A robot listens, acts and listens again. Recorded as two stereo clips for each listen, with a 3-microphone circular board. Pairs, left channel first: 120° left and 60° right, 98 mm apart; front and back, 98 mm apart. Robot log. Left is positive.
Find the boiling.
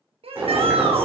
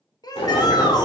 note: The boiling: 10° left.
cmd yaw +10
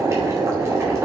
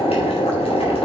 end: Facing the boiling, 2 to 4 m away.